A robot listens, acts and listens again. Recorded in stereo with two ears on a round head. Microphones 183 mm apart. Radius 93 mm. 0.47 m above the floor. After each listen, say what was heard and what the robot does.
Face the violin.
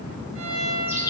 The violin: about 75° right or 105° right. Turn 75° right.
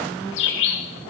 Keep listening.
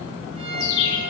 So it is at 30° right. Turn 30° right.
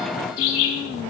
Keep listening.
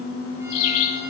Keep listening.
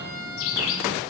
The violin is now 10° right. Turn 10° right.
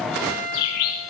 Found it: a violin, straight ahead, 2 to 4 m away.